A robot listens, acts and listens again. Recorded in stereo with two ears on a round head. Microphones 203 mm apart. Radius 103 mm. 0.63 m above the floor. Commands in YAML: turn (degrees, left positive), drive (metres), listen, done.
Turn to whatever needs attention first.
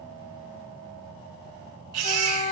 turn: -90
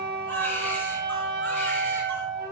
listen: true
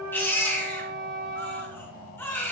turn: 10
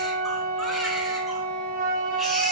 listen: true
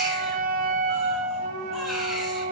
listen: true
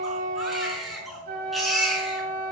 done: "Found it: a baby crying, straight ahead, over 4 m away."